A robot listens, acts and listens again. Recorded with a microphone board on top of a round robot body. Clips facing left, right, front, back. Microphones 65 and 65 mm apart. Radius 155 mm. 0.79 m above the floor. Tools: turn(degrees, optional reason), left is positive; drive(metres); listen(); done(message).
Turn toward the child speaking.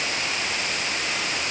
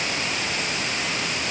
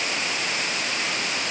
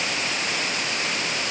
listen()
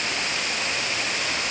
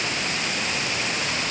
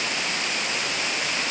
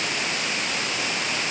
listen()
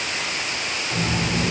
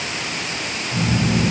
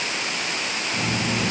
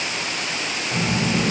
turn(degrees=130, reason="The child speaking: 130° left.")
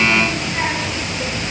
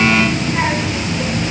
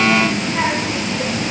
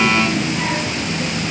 turn(degrees=-20, reason="The child speaking is now 20° right.")
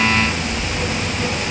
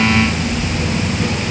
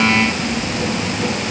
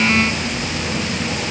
turn(degrees=10, reason="The child speaking is now 10° left.")
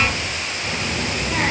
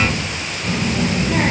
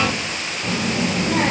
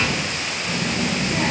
done("Found it: a child speaking, straight ahead.")